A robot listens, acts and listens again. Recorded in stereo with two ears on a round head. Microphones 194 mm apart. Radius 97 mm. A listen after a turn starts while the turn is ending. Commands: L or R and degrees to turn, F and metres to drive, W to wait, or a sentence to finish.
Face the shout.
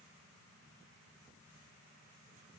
W
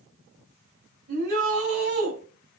R50
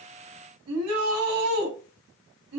R80
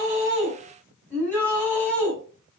Found it: a shout, straight ahead.